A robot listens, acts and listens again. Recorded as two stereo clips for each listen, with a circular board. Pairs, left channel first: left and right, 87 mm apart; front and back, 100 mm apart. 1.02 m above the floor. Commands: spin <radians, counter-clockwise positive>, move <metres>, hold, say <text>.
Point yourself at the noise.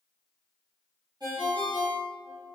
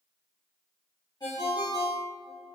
spin -0.87
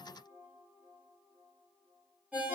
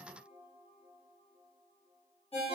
spin -0.26
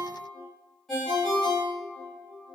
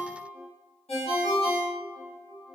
say Found it: a ringtone, straight ahead, 1 to 2 m away.